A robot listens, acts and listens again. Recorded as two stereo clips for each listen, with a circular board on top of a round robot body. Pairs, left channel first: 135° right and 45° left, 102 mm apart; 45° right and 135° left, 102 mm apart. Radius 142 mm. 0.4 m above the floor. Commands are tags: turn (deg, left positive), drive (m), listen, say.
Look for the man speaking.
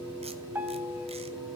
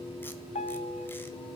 <listen/>
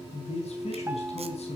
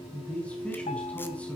<turn deg="-125"/>
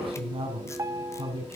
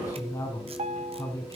<turn deg="15"/>
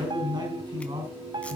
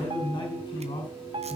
<say>Facing the man speaking, over 4 m away.</say>